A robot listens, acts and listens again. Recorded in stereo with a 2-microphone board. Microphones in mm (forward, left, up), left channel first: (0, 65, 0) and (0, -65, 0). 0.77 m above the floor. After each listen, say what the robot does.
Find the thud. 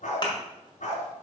Turn 35° left.
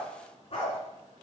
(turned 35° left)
Keep listening.
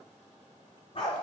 I heard a thud, but can't make it out now. It was about straight ahead or 110° left.